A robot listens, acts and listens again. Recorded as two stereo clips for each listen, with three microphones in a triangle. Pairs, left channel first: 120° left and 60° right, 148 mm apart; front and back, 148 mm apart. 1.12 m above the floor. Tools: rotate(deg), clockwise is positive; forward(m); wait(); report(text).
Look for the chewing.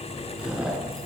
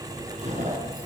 rotate(145)
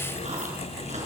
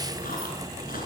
wait()
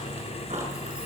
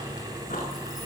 rotate(20)
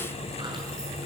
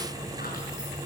wait()
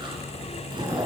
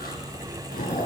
report("Facing the chewing, over 4 m away.")